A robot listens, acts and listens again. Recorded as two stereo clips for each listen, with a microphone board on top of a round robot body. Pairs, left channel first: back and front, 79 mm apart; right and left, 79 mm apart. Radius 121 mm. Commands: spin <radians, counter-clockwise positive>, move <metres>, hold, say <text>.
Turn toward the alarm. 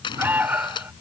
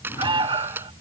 spin 1.22
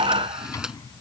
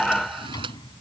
say Found it: an alarm, straight ahead.